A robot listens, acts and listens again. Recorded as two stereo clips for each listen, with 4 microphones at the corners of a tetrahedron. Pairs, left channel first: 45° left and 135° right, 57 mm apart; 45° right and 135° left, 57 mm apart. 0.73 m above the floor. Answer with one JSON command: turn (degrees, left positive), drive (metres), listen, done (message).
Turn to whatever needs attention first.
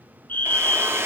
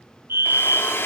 {"turn": 95}
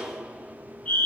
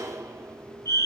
{"turn": -20}
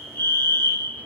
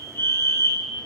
{"done": "Found it: a fire alarm, straight ahead, over 4 m away."}